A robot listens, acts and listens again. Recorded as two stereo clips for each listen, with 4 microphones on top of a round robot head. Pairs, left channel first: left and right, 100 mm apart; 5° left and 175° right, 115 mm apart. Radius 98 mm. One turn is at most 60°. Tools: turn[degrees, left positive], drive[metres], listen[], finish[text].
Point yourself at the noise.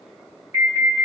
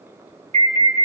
Thought: The alarm: 155° right.
Action: turn[-60]
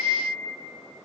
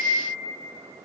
Thought: Nothing new. It was at 95° right.
Action: turn[-60]
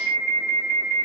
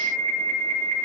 Thought: The alarm is now 60° right.
Action: turn[-60]
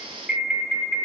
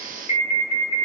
Thought: The alarm is now 15° right.
Action: turn[-15]
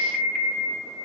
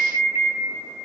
Action: finish[Facing the alarm, over 4 m away.]